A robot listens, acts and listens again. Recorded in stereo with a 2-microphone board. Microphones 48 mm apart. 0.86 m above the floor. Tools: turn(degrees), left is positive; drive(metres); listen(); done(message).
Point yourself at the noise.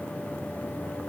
listen()
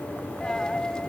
turn(degrees=15)
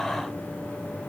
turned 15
listen()
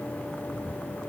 done("I heard a dropped coin, but can't make it out now. It was about straight ahead or 150° left.")